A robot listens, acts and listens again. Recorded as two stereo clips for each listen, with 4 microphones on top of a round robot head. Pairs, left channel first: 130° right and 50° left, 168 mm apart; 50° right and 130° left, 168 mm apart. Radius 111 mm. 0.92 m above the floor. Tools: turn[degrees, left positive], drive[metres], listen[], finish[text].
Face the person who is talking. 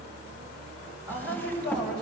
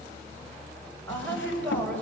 Thought: The woman speaking: 130° right.
Action: turn[-130]
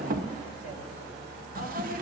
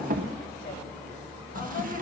Action: listen[]
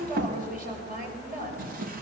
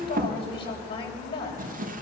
Thought: The woman speaking is now 10° left.
Action: turn[10]
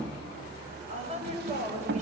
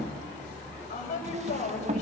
Action: finish[Facing the woman speaking, over 4 m away.]